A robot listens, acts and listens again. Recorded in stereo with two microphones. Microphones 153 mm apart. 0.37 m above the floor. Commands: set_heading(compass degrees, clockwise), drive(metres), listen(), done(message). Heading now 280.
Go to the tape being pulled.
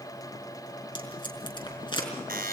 set_heading(250)
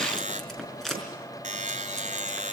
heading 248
drive(1.0)
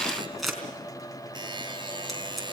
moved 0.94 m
drive(1.0)
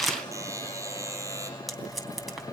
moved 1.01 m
drive(1.0)
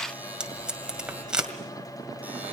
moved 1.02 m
drive(1.0)
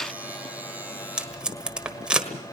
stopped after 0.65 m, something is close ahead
set_heading(258)
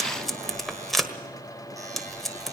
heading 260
done("I am next to the tape being pulled.")